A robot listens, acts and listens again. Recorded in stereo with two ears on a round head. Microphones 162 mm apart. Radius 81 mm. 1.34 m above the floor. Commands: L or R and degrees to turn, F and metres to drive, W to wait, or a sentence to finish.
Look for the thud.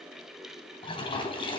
W
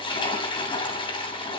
W
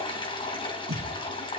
R55
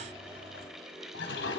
W
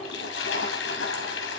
I heard a thud, but can't make it out now. It was about straight ahead or 70° right.